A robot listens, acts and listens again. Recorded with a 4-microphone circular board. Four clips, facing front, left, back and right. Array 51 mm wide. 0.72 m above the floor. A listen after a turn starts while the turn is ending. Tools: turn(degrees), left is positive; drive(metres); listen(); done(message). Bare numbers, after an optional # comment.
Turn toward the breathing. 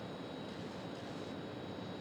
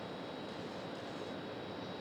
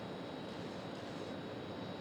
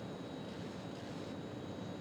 listen()
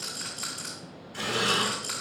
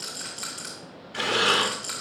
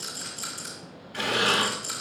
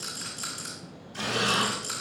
# The breathing: 115° left.
turn(115)
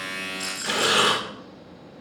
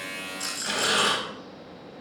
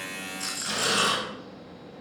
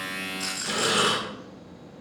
done("Facing the breathing.")